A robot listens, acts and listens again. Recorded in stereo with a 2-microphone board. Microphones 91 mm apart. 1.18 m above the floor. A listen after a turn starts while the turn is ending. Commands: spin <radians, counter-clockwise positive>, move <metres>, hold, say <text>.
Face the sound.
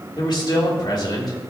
spin 0.96
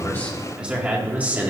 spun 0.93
spin -0.35
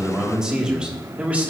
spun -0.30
spin -0.26
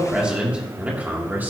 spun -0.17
spin -0.35
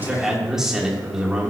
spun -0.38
say Found it: a man speaking, straight ahead.